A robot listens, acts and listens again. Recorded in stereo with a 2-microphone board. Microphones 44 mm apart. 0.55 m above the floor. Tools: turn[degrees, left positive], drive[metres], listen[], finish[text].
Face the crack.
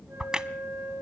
Thought: The crack: about 20° right or 160° right.
Action: turn[-20]
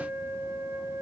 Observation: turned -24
Action: listen[]
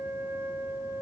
Action: finish[I heard a crack, but can't make it out now. It was about 5° left or 135° right.]